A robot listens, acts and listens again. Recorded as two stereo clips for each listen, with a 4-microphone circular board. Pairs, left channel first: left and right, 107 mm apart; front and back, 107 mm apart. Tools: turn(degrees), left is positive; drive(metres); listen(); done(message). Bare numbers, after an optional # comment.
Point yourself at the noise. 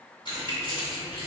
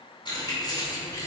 # The keys jangling: 55° left.
turn(55)
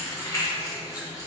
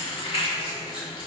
# The keys jangling is now 35° left.
turn(35)
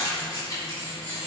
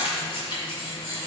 # The keys jangling is now 40° left.
turn(40)
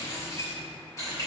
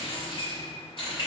# The keys jangling is now 30° left.
turn(30)
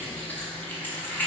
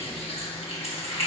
# The keys jangling is now 15° left.
turn(15)
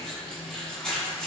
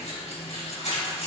# The keys jangling is now 10° left.
turn(10)
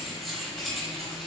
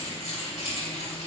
done("Facing the keys jangling.")